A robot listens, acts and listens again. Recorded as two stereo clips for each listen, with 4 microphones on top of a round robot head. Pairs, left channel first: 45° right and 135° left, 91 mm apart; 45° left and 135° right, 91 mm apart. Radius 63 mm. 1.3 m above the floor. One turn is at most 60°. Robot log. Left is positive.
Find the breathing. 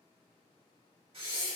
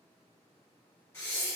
note: The breathing: 110° left.
cmd yaw +60
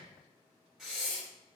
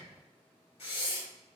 note: The breathing is now 50° left.
cmd yaw +50
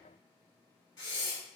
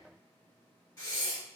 end: Facing the breathing, 1 to 2 m away.